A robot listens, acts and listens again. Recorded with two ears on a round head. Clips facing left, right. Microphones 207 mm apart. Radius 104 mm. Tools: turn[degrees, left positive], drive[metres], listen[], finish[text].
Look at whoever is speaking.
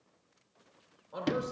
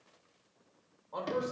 Action: turn[30]
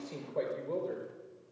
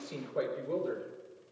Thought: So it is at 10° right.
Action: turn[-10]
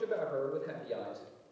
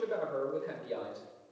Action: finish[Found it: a man speaking, straight ahead, over 4 m away.]